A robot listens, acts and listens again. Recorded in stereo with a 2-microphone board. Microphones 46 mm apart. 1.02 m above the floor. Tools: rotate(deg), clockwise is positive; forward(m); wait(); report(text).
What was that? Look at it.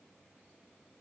wait()
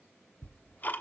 rotate(-40)
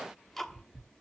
report("Facing the ticking, 1 to 2 m away.")